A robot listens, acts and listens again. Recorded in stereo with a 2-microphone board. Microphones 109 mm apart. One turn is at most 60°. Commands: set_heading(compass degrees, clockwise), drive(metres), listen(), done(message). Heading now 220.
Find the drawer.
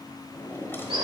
set_heading(200)
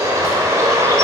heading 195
listen()
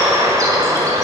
listen()
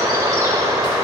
done("I heard a drawer, but can't make it out now. It was about 5° right or 135° left.")